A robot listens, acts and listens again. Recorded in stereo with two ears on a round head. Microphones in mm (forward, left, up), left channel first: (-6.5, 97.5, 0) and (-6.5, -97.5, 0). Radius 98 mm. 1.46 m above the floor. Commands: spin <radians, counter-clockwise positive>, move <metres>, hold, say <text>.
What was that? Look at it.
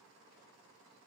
hold
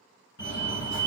spin 0.87
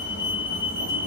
spin 1.13
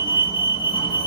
spin 0.44
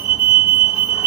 spin -0.17
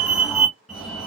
say Found it: a fire alarm, straight ahead.